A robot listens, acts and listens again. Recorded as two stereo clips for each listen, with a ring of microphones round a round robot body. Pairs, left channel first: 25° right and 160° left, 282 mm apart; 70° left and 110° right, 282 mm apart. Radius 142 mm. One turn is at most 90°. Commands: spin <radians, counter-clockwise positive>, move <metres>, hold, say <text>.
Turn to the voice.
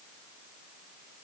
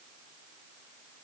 hold
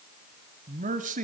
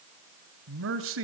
spin -1.57
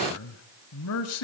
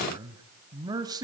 spin -0.70
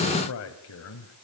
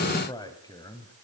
say Facing the man speaking, 1 to 2 m away.